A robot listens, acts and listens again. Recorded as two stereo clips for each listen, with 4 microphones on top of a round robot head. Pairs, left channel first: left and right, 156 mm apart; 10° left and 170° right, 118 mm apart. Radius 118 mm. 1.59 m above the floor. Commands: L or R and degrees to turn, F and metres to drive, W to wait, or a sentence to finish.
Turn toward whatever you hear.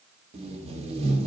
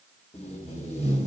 R45
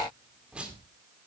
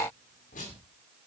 R10
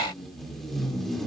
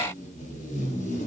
Found it: tape being pulled, straight ahead.